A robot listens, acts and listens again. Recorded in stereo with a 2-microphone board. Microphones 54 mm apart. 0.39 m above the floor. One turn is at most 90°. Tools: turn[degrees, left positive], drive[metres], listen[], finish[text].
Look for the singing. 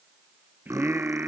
Thought: The singing: about 40° right or 140° right.
Action: turn[-40]
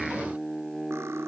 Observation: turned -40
Action: finish[Facing the singing.]